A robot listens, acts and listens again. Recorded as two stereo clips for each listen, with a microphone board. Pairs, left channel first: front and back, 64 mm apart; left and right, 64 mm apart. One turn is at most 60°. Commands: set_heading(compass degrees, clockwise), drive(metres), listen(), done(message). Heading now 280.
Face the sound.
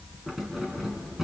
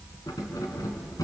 set_heading(220)
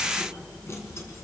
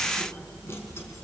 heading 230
set_heading(185)
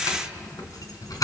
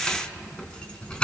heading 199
set_heading(184)
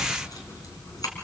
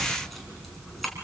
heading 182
done("Found it: keys jangling, straight ahead, 2 to 4 m away.")